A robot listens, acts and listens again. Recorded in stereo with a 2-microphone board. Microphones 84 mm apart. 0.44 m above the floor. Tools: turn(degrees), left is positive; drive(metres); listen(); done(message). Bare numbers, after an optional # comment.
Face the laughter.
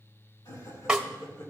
# The laughter: about 35° left or 145° left.
turn(35)
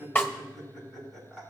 done("Found it: laughter, straight ahead, over 4 m away.")